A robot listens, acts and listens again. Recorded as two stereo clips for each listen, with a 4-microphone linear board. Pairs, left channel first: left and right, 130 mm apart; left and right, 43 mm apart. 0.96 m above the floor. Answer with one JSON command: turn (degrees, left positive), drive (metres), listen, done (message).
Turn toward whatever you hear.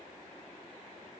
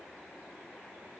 {"listen": true}
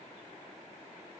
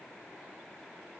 {"listen": true}
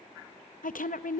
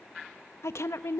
{"turn": 90}
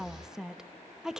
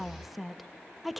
{"done": "Facing the woman speaking, under 1 m away."}